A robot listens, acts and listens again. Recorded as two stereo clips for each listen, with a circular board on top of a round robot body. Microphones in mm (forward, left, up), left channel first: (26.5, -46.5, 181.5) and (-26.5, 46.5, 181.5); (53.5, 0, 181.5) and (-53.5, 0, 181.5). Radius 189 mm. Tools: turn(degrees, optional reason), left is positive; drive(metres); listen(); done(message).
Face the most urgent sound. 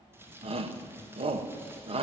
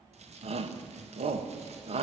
turn(degrees=155, reason="The shout: 155° left.")
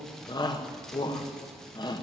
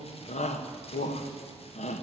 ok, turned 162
turn(degrees=-10, reason="The shout is now 10° right.")
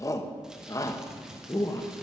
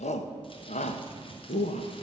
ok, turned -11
done("Facing the shout.")